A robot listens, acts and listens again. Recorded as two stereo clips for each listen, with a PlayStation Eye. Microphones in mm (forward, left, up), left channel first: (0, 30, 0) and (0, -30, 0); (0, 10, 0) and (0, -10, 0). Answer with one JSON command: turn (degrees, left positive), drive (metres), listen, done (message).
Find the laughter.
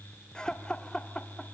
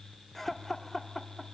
{"turn": 30}
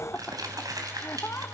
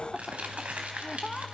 {"turn": 135}
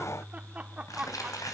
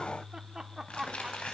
{"turn": -20}
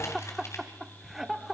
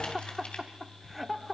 {"done": "Facing the laughter, 1 to 2 m away."}